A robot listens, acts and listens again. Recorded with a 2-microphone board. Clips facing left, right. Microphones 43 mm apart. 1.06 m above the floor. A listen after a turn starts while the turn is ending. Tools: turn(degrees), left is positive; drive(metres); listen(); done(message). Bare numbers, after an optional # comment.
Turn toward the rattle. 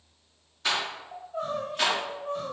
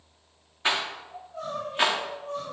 # The rattle: about 30° right or 150° right.
turn(-30)
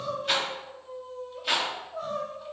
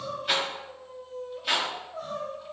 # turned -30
done("Facing the rattle, under 1 m away.")